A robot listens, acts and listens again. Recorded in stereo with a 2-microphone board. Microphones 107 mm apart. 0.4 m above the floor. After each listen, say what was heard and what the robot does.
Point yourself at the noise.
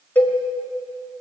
The cowbell: about 15° left or 165° left. Turn 15° left.
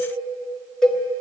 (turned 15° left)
Found it: a cowbell, straight ahead, 2 to 4 m away.